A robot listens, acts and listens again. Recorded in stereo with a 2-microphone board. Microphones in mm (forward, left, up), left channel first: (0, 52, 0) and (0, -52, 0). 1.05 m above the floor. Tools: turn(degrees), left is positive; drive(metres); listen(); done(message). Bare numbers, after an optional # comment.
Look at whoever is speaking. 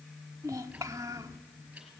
# The child speaking: about 30° right or 150° right.
turn(-30)
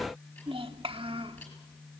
# So it is at 115° right.
turn(-115)
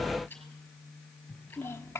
# The child speaking is now 25° left.
turn(25)
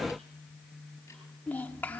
# The child speaking is now 15° left.
turn(15)
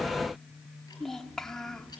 done("Facing the child speaking, 1 to 2 m away.")